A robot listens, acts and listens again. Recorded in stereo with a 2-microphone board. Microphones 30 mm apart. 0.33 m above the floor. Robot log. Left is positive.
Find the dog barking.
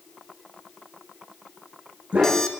note: The dog barking: about 50° right or 130° right.
cmd yaw -50
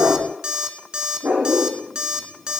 note: So it is at 80° right.
cmd yaw -80
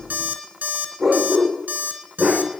note: The dog barking is now 10° right.
cmd yaw -10
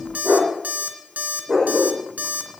end: Facing the dog barking.